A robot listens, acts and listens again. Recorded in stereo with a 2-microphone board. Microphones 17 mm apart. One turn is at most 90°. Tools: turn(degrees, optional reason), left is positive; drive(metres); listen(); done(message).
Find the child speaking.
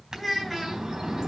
turn(degrees=30)
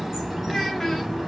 listen()
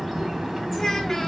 listen()
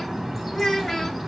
turn(degrees=90, reason="So it is at 150° left.")
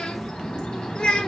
turn(degrees=65, reason="The child speaking is now 65° left.")
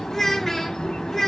turn(degrees=15, reason="The child speaking is now 15° left.")
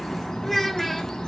listen()
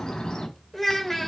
done("Found it: a child speaking, straight ahead, 1 to 2 m away.")